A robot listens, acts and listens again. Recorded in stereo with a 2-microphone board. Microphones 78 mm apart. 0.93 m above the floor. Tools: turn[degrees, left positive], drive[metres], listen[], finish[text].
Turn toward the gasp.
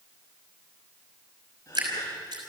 Thought: The gasp: about 30° left or 150° left.
Action: turn[30]
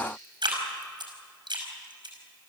Action: listen[]
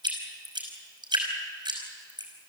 Action: finish[I heard a gasp, but can't make it out now. It was about straight ahead or 120° left.]